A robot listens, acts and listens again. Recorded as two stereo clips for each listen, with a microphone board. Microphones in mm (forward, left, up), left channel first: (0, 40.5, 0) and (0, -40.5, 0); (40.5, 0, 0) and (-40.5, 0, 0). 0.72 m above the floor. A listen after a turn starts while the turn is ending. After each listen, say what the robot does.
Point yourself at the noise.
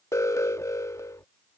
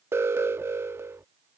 Turn 130° left.
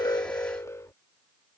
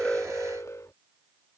Turn 45° left.
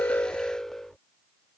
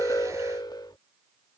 Facing the alarm.